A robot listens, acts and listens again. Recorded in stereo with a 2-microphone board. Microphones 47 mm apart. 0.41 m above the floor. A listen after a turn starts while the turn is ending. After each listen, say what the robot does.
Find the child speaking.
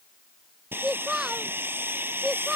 Turn 30° right.
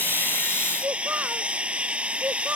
Turn 140° right.
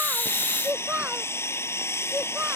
Turn 35° right.
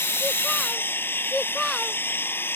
Facing the child speaking.